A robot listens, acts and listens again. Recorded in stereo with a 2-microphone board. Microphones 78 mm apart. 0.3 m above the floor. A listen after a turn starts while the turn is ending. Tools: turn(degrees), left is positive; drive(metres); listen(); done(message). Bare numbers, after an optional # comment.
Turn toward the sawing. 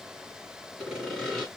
turn(30)
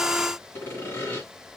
# So it is at 150° left.
turn(150)
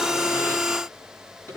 # The sawing is now 30° left.
turn(30)
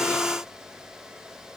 listen()
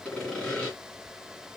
# The sawing is now 15° left.
turn(15)
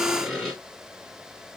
done("Found it: sawing, straight ahead, 2 to 4 m away.")